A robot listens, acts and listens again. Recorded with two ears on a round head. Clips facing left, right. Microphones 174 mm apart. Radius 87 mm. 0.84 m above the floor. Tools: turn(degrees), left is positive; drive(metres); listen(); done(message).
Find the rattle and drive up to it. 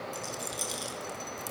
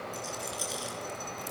turn(degrees=50)
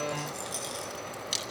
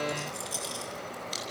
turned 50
drive(metres=1.0)
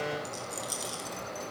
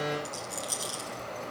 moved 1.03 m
drive(metres=1.0)
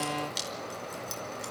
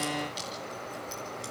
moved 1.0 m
listen()
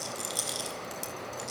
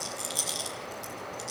drive(metres=1.0)
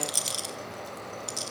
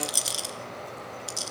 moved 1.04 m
drive(metres=1.0)
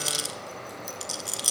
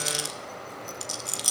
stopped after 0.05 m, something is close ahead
done("Arrived at the rattle, straight ahead.")